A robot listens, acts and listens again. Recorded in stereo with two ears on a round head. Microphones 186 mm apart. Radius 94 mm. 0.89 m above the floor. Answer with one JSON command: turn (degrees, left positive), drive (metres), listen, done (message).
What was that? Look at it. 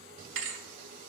{"turn": -65}
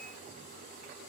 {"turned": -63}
{"listen": true}
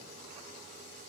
{"done": "I heard a thud, but can't make it out now. It was about 5° right or 50° right."}